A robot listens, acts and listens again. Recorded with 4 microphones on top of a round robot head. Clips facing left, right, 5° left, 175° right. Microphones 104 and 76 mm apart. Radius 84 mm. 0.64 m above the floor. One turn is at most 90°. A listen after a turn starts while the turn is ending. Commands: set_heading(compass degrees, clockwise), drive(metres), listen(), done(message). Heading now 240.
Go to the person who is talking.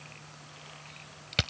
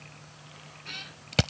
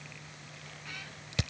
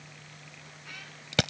listen()
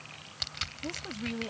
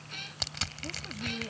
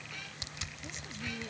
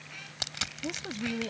set_heading(150)
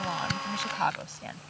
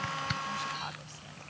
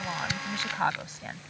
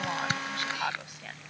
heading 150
set_heading(80)
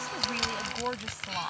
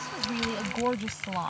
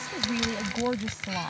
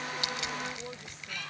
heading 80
set_heading(110)
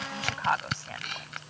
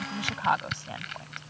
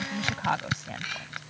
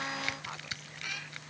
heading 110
set_heading(130)
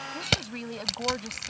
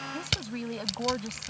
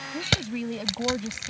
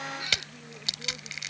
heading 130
drive(1.0)
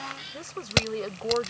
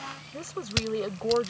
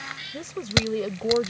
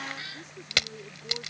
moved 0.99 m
drive(1.0)
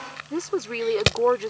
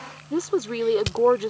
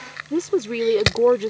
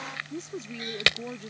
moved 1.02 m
set_heading(140)
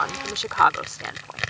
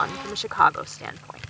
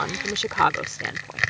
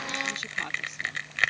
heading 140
drive(1.0)
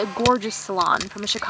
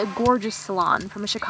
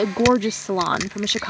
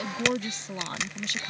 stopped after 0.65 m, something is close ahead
done("Arrived at the woman speaking, straight ahead.")